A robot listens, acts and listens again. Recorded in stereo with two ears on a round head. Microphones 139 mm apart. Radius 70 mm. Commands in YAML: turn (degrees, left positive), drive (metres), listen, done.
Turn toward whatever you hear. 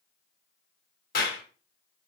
turn: 65
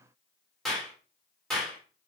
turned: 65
done: "Found it: a clap, straight ahead."